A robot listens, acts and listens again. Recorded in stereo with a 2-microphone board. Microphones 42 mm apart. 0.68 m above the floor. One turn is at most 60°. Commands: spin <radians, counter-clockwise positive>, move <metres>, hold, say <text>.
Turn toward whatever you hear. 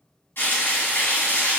spin 1.05
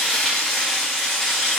spin 0.26
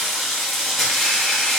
say Found it: frying, straight ahead.